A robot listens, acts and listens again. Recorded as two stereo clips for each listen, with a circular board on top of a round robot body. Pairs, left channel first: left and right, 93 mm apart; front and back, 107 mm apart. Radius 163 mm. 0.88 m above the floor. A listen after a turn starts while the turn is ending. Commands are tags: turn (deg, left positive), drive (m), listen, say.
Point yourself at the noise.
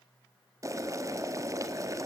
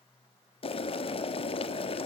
<turn deg="-35"/>
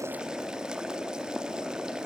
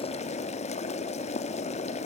<say>Facing the boiling.</say>